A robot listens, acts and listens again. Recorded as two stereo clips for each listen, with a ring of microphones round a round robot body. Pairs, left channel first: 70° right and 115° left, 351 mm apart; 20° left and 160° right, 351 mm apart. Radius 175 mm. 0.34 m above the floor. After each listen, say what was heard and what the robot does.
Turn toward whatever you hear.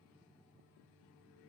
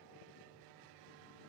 Keep listening.
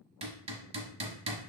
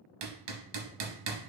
The hammering: 175° right. Turn 175° right.
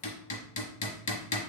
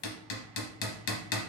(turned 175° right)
Found it: hammering, straight ahead, 1 to 2 m away.